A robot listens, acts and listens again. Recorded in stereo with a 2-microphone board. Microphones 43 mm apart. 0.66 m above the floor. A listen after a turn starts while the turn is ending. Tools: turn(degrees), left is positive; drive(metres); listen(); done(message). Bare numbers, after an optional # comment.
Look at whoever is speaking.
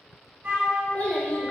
# The child speaking: about 35° left or 145° left.
turn(35)
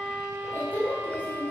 # The child speaking: about 35° left or 145° left.
turn(35)
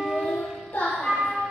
# So it is at 125° left.
turn(125)
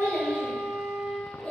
# The child speaking is now 25° left.
turn(25)
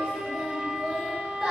# The child speaking is now 15° right.
turn(-15)
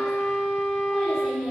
done("Found it: a child speaking, straight ahead, 2 to 4 m away.")